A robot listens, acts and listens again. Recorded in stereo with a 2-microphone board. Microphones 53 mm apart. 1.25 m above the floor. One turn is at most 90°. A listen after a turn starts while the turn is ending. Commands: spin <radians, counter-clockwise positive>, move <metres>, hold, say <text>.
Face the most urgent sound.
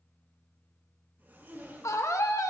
spin 1.57
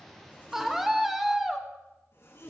say Facing the scream.